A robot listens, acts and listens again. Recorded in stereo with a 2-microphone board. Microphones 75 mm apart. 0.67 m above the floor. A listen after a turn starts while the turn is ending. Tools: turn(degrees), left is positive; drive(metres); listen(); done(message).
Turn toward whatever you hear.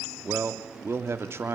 turn(degrees=-35)
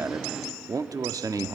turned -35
turn(degrees=-100)
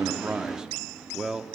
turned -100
turn(degrees=-10)
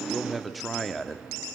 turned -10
done("Facing the man speaking, 1 to 2 m away.")